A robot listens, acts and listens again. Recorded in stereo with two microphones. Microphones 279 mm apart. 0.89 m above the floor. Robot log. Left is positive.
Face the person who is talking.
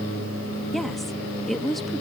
cmd yaw +30
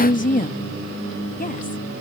note: So it is at 150° left.
cmd yaw +150
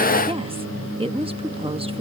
note: The woman speaking is now 20° right.
cmd yaw -20
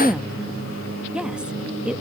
end: Facing the woman speaking.